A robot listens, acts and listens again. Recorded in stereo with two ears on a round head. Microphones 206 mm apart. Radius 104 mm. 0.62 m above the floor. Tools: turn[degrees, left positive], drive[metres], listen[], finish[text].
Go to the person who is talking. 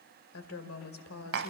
Thought: The woman speaking: about 70° left or 110° left.
Action: turn[70]
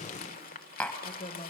Thought: So it is at 30° left.
Action: turn[30]
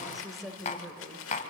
Action: drive[1.0]
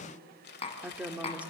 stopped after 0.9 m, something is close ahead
Action: finish[I am next to the woman speaking.]